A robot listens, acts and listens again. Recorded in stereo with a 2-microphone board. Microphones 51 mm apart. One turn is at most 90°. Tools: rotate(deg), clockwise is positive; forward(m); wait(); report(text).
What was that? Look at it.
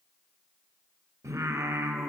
rotate(90)
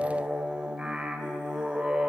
rotate(15)
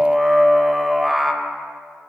report("Found it: singing, straight ahead, under 1 m away.")